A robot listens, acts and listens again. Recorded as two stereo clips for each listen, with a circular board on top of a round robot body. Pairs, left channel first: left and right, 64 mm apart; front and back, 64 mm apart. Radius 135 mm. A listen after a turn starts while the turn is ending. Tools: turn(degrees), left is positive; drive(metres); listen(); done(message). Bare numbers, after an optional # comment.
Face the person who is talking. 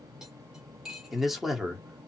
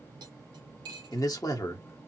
done("Found it: a man speaking, straight ahead, 1 to 2 m away.")